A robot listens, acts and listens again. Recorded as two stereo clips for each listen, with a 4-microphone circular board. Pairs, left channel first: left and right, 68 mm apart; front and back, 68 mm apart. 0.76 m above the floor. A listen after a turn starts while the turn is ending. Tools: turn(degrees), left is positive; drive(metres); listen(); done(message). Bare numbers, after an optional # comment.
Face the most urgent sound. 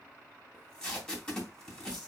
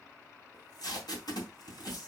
listen()
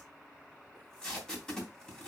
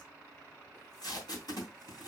listen()
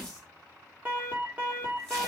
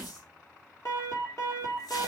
# The alarm: 30° right.
turn(-30)
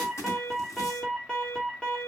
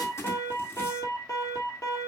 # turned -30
# The alarm is now 15° left.
turn(15)
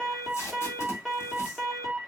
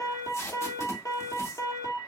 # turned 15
done("Facing the alarm.")